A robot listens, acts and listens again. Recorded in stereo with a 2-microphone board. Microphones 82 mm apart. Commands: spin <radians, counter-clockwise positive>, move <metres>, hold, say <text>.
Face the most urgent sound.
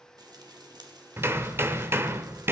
hold
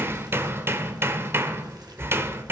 hold
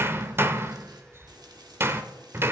say I can't make out anything urgent to turn to.